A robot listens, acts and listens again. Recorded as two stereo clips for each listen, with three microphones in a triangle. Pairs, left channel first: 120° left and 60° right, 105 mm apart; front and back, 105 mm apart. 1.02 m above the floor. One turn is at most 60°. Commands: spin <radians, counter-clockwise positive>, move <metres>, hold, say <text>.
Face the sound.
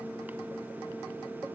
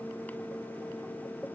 hold
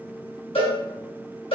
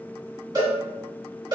spin 1.05
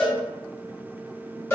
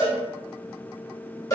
spin 0.87
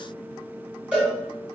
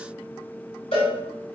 spin 0.26
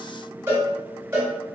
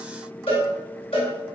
say Facing the cowbell, 1 to 2 m away.